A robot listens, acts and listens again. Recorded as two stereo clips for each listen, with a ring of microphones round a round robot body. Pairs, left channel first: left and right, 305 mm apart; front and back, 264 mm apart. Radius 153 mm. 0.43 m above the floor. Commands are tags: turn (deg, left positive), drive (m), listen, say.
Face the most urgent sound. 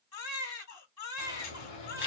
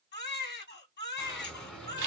<turn deg="55"/>
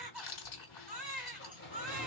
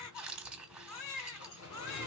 <say>Found it: a baby crying, straight ahead.</say>